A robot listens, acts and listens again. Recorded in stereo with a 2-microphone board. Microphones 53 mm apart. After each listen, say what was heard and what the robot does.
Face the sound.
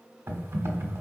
The typing on a keyboard: about 55° right or 125° right. Turn 55° right.
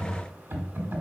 So it is at 55° right. Turn 55° right.
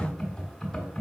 The typing on a keyboard is now 10° left. Turn 10° left.
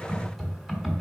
Found it: typing on a keyboard, straight ahead, 1 to 2 m away.